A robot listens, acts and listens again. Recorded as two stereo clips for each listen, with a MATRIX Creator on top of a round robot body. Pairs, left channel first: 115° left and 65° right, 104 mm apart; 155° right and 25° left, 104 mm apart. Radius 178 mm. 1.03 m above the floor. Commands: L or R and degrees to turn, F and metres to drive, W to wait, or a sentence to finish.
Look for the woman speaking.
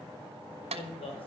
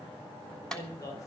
L145
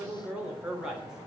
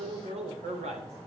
L15
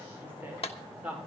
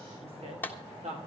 L10
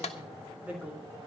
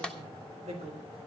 L10
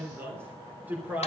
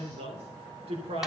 Facing the woman speaking.